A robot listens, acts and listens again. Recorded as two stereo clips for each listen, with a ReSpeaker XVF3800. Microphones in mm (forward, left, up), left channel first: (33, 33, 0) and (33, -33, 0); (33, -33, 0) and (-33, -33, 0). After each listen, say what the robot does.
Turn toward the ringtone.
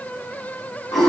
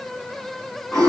Keep listening.
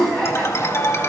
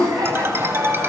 Turn 130° left.
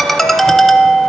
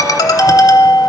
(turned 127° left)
Facing the ringtone, under 1 m away.